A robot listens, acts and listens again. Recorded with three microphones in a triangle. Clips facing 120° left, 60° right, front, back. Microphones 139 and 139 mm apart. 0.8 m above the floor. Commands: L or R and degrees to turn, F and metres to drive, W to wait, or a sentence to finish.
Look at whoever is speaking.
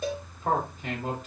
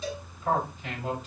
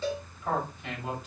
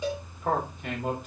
L155
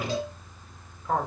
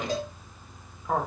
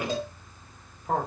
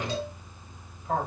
L20
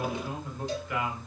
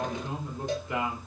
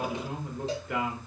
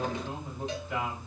Found it: a man speaking, straight ahead, 2 to 4 m away.